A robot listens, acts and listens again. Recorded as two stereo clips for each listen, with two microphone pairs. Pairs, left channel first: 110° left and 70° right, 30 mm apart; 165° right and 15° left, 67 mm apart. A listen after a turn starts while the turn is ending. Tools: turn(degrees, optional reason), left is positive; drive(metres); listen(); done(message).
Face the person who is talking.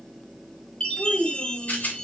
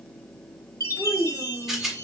turn(degrees=50, reason="The child speaking: 50° left.")
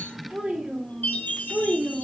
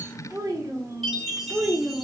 turn(degrees=-30, reason="The child speaking is now 30° right.")
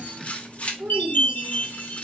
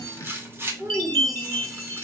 turn(degrees=-35, reason="The child speaking is now 35° right.")
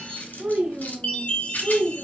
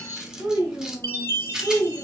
turn(degrees=-40, reason="The child speaking is now 40° right.")
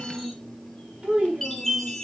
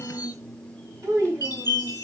turn(degrees=-10, reason="The child speaking is now 10° right.")
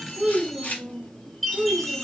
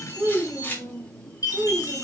done("Found it: a child speaking, straight ahead, 1 to 2 m away.")